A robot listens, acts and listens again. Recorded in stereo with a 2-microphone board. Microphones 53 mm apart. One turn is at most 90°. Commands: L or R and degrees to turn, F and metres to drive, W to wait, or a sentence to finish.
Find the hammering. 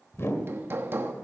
R45
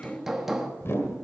Facing the hammering, 1 to 2 m away.